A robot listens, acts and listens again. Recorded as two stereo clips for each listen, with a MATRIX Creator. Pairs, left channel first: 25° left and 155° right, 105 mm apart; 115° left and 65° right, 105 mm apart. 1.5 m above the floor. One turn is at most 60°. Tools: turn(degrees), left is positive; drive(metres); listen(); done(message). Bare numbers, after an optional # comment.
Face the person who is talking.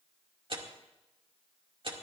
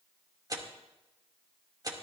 listen()
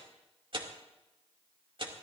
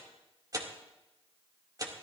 listen()
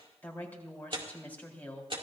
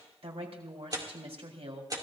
# The woman speaking: 50° right.
turn(-50)
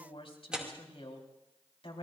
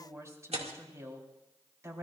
done("Found it: a woman speaking, straight ahead.")